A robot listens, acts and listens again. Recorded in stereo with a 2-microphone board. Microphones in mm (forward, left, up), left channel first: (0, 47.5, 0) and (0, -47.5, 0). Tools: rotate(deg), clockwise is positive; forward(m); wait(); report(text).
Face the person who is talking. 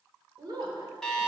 rotate(55)
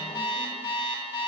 wait()
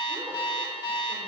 wait()
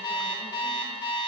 report("I heard a woman speaking, but can't make it out now. It was about straight ahead or 70° right.")